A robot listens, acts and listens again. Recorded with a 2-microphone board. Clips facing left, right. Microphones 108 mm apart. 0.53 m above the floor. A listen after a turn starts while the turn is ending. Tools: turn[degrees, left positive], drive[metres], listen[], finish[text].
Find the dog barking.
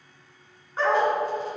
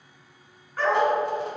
Thought: The dog barking: about 25° left or 155° left.
Action: turn[25]
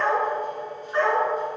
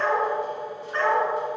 Thought: The dog barking: about 15° left or 165° left.
Action: turn[15]
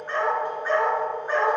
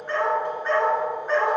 Action: turn[30]
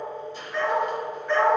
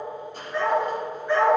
Thought: So it is at 10° right.
Action: turn[-10]
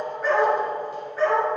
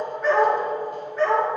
Action: finish[Facing the dog barking.]